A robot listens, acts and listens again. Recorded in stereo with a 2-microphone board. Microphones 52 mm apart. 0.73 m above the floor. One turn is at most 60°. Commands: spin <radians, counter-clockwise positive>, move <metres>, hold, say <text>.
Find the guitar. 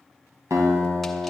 spin -1.05
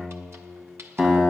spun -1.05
spin -0.26
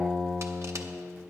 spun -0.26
say Found it: a guitar, straight ahead, 2 to 4 m away.